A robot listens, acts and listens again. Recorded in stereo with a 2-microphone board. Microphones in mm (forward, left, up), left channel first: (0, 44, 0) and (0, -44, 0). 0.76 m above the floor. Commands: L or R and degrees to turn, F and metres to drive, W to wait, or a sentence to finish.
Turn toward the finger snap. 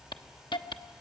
W
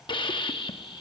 W
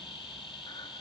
I can't make out a finger snap, only a hiss.